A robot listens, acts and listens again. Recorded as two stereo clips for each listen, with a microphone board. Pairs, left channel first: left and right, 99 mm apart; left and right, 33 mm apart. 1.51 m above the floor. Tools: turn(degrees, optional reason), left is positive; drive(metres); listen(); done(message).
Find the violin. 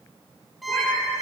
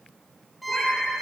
turn(degrees=30)
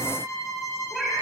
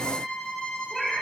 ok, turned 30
turn(degrees=150, reason="So it is at 150° left.")
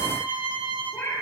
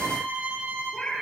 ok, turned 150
turn(degrees=-60, reason="The violin is now 60° right.")
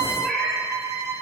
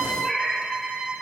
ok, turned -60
turn(degrees=-30, reason="The violin is now 30° right.")
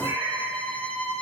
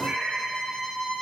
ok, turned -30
turn(degrees=15, reason="The violin is now 15° left.")
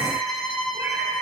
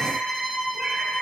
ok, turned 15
done("Facing the violin.")